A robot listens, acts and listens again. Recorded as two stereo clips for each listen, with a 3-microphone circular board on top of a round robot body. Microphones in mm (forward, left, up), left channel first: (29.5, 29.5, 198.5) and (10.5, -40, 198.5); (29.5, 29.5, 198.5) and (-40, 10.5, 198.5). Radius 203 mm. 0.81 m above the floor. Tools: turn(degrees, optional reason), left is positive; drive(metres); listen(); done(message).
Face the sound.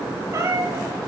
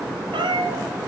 turn(degrees=-165, reason="The cat meowing: 165° right.")
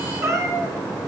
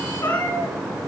turn(degrees=-55, reason="The cat meowing is now 55° right.")
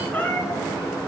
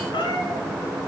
done("Found it: a cat meowing, straight ahead, 2 to 4 m away.")